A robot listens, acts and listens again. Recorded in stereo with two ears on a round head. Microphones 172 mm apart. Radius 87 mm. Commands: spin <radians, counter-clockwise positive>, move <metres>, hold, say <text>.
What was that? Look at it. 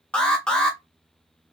spin 0.52
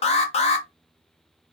spin 2.44
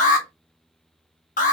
spin 0.79
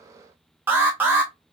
spin -0.17
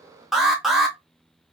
say Facing the alarm.